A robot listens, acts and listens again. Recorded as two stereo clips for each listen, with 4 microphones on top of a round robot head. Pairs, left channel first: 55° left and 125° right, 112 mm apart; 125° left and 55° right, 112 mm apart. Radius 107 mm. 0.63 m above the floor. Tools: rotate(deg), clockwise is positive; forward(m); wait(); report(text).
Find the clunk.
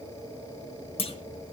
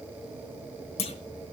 rotate(-95)
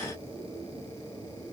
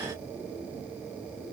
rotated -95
report("Facing where the clunk came from. I can't hear it now.")